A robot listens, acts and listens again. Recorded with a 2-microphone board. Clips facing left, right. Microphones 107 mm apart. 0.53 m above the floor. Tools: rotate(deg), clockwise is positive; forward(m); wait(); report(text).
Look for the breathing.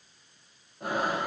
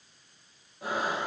rotate(-55)
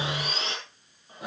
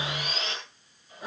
rotate(-70)
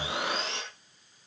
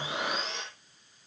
report("Found it: breathing, straight ahead, over 4 m away.")